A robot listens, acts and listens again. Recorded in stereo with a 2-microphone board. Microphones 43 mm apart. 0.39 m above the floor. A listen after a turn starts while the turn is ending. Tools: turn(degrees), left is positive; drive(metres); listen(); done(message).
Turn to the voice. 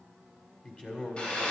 turn(degrees=30)
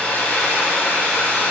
listen()
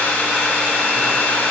listen()
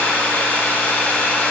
done("I heard a man speaking, but can't make it out now. It was about straight ahead or 120° left.")